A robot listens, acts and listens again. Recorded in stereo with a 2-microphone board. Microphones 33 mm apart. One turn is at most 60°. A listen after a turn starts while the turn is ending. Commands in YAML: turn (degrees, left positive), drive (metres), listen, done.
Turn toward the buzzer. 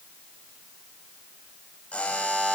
turn: 40
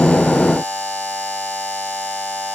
turn: 60
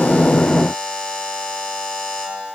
turn: 35
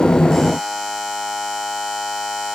turn: 10
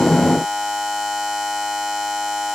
done: "Facing the buzzer, over 4 m away."